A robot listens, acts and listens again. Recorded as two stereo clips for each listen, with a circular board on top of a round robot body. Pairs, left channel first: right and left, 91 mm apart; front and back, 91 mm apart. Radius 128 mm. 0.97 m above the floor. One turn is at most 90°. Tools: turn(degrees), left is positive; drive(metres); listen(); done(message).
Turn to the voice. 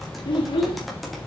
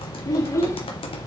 turn(degrees=-60)
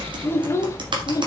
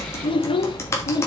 turn(degrees=-40)
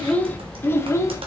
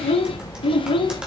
turn(degrees=-30)
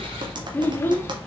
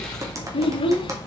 turn(degrees=-25)
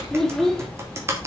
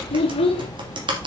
done("Found it: a child speaking, straight ahead.")